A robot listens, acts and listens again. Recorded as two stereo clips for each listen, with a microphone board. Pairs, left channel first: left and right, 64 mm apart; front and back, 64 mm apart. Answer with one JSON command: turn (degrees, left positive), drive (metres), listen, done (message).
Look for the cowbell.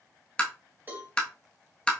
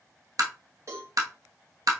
{"turn": -150}
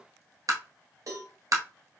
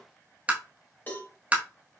{"turn": -60}
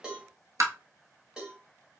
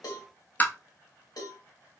{"turn": -15}
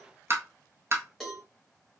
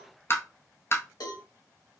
{"done": "Facing the cowbell, 1 to 2 m away."}